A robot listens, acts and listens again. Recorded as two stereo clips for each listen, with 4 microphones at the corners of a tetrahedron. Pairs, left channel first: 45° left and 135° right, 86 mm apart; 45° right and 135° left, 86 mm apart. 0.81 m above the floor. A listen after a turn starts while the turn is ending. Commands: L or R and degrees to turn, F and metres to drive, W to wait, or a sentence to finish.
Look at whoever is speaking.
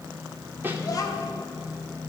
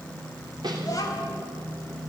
Facing the child speaking.